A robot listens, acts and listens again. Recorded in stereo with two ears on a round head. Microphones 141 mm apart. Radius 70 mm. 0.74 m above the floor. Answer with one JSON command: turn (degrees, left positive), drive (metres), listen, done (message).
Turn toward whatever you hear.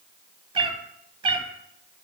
{"turn": -35}
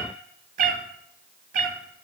{"turn": -100}
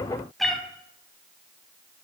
{"done": "Found it: a cat meowing, straight ahead, under 1 m away."}